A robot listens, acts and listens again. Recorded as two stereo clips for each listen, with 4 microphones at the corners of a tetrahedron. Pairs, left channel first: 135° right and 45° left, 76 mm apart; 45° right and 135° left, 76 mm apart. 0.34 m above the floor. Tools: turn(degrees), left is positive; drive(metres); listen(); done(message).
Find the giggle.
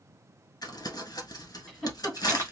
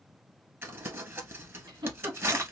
turn(degrees=140)
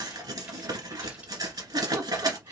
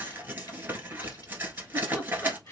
turn(degrees=20)
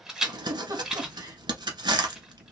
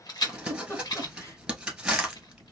done("Facing the giggle, 1 to 2 m away.")